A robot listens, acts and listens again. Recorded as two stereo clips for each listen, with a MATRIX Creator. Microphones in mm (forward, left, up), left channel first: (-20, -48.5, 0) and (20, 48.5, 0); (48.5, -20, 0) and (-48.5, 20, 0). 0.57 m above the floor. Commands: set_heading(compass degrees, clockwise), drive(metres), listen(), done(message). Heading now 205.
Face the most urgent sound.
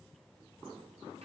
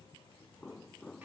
listen()
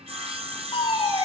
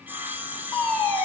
set_heading(0)
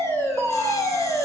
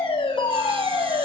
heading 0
set_heading(55)
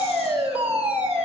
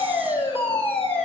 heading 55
set_heading(65)
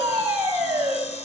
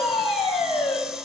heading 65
done("Found it: a fire alarm, straight ahead.")